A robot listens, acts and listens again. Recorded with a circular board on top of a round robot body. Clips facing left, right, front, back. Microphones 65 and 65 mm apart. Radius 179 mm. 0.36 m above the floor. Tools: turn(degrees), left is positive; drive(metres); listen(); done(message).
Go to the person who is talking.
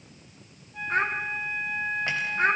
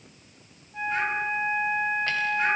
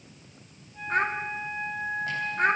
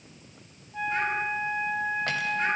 turn(degrees=40)
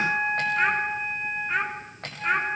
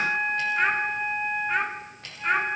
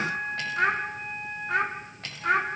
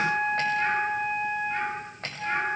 drive(metres=1.0)
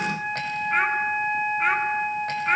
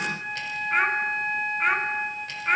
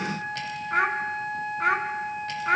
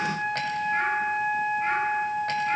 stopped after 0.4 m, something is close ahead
done("Blocked. The child speaking is further on, straight ahead.")